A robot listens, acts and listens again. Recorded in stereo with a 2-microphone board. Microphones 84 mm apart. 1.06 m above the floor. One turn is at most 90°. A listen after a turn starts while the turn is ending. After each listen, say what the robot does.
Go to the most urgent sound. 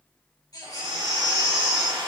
Turn 50° left.
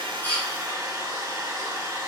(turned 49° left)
Keep listening.
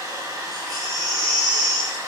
Drive 1.0 m forward.
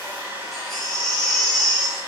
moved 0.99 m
Drive 1.0 m forward.
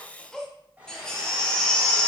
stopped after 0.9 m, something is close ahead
Turn 10° left.
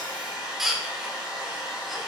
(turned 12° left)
I am next to the baby crying.